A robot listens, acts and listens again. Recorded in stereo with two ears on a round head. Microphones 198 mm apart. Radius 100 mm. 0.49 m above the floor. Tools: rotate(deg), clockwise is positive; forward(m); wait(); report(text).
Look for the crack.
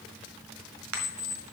rotate(65)
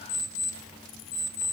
wait()
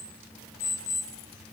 report("I heard a crack, but can't make it out now. It was about straight ahead or 50° right.")